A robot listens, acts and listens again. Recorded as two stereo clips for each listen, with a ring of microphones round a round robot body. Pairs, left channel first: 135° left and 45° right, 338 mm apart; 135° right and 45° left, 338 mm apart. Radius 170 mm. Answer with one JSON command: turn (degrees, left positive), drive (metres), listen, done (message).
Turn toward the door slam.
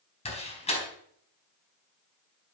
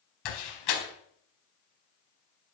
{"turn": -155}
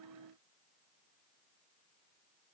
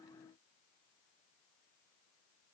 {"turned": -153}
{"done": "Facing where the door slam came from. I can't hear it now."}